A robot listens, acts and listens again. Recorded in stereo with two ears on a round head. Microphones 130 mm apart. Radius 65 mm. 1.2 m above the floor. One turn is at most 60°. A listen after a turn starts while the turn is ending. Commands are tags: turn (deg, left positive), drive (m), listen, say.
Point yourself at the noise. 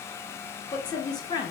<turn deg="30"/>
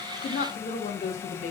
<turn deg="60"/>
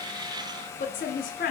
<turn deg="60"/>
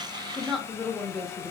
<say>Found it: a woman speaking, straight ahead, under 1 m away.</say>